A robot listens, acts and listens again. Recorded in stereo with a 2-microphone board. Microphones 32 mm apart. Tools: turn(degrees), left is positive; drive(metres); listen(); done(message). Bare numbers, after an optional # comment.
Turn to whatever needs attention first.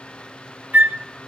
listen()
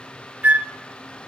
listen()
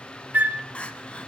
# The crying: about 35° left or 145° left.
turn(35)
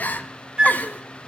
# So it is at 105° left.
turn(105)
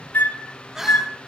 # The crying is now 15° right.
turn(-15)
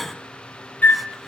done("Facing the crying.")